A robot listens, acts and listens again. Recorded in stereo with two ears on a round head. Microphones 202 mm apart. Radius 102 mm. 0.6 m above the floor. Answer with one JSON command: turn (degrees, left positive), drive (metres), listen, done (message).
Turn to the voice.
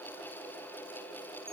{"listen": true}
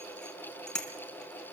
{"listen": true}
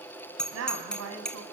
{"turn": -70}
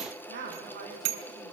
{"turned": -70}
{"turn": -40}
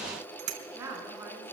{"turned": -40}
{"turn": -10}
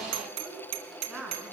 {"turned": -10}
{"done": "Found it: a woman speaking, straight ahead."}